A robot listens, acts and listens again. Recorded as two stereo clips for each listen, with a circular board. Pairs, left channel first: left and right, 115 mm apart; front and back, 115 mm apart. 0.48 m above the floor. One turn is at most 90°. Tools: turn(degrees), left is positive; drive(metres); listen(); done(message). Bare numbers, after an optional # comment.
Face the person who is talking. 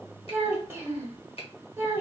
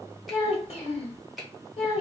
# The child speaking: 20° right.
turn(-20)
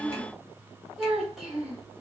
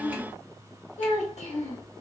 done("Facing the child speaking.")